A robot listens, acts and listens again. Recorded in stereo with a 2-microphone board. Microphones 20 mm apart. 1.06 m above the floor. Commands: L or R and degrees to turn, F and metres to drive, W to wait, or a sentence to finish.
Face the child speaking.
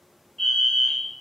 W
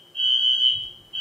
L20
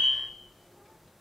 L135
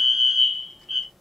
L35
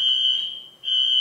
W
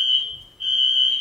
R10
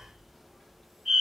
Facing the child speaking.